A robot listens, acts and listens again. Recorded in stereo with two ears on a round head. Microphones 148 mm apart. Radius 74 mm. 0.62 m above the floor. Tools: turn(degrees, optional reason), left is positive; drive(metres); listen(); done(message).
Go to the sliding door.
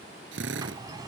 turn(degrees=-25, reason="The sliding door: about 25° right or 155° right.")
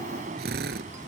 turn(degrees=-130, reason="So it is at 130° right.")
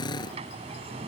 turn(degrees=-40, reason="The sliding door is now 40° right.")
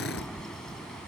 drive(metres=1.0)
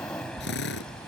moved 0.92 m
drive(metres=1.0)
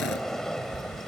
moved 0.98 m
drive(metres=1.0)
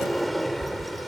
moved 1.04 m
drive(metres=1.0)
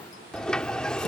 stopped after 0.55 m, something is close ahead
done("Arrived at the sliding door, straight ahead.")